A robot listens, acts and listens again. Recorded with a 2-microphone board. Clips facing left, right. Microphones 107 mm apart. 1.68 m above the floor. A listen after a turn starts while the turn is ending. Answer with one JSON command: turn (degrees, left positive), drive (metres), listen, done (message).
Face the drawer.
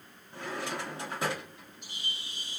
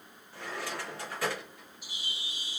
{"turn": 20}
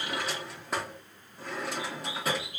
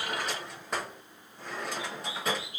{"done": "Facing the drawer."}